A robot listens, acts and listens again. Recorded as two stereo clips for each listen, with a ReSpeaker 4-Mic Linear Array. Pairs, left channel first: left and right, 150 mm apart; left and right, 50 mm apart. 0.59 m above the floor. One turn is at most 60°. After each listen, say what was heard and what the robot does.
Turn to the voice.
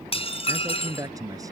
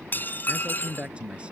The man speaking: about 20° right or 160° right. Turn 20° right.
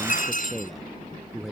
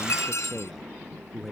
Found it: a man speaking, straight ahead.